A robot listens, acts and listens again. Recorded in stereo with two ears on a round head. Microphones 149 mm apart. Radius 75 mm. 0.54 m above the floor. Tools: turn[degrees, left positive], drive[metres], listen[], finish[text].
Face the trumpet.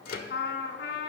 Thought: The trumpet: about 65° left or 115° left.
Action: turn[65]
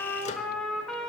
Action: finish[Facing the trumpet.]